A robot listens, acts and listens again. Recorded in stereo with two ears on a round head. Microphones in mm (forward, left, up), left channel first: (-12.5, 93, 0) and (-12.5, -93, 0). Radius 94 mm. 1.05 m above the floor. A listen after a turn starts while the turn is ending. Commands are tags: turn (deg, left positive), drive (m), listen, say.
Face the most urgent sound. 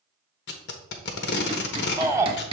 <turn deg="-30"/>
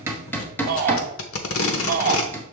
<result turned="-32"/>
<turn deg="-135"/>
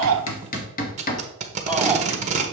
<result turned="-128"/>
<say>Facing the shout, under 1 m away.</say>